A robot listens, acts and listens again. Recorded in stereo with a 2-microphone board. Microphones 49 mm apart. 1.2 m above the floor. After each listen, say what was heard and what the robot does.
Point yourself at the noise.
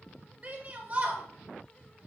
The shout: about 30° right or 150° right. Turn 30° right.
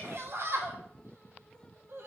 So it is at 115° right. Turn 115° right.
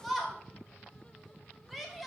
Found it: a shout, straight ahead.